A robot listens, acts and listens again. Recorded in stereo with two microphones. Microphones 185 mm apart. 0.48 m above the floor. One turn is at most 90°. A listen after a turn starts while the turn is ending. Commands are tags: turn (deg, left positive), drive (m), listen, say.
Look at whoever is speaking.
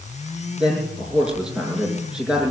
<turn deg="-30"/>
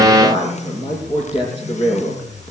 <turn deg="25"/>
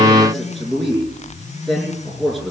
<say>Found it: a man speaking, straight ahead.</say>